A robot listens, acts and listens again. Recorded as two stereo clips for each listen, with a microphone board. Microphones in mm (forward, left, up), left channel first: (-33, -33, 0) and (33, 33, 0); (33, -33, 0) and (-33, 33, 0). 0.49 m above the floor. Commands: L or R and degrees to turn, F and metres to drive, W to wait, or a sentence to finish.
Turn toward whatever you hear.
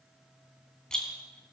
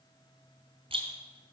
L140
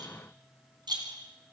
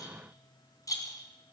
Found it: a rattle, straight ahead, 2 to 4 m away.